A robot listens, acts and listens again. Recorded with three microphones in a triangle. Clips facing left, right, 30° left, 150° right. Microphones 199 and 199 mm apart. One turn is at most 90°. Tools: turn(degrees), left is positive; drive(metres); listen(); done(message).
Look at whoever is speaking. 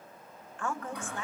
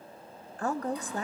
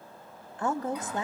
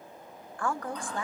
turn(degrees=-40)
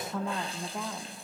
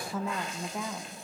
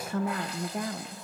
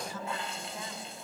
done("Facing the woman speaking.")